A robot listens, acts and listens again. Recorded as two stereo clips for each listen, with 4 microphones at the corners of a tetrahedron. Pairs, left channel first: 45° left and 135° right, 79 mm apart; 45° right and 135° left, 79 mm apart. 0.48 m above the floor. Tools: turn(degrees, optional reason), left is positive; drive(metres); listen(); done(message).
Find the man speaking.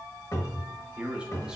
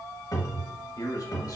turn(degrees=-60, reason="The man speaking: 60° right.")
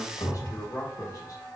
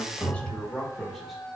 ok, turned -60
turn(degrees=45, reason="The man speaking is now 45° left.")
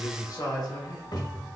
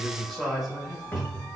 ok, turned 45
turn(degrees=50, reason="The man speaking is now 50° left.")
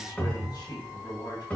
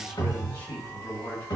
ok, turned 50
turn(degrees=15, reason="The man speaking is now 15° left.")
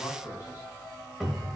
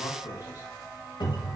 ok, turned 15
done("Found it: a man speaking, straight ahead.")